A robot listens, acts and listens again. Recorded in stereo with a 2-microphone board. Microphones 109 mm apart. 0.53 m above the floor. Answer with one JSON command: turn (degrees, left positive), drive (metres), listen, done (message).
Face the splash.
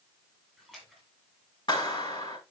{"turn": 30}
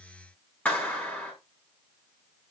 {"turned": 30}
{"listen": true}
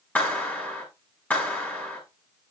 {"done": "I heard a splash, but can't make it out now. It was about 25° right or 145° left."}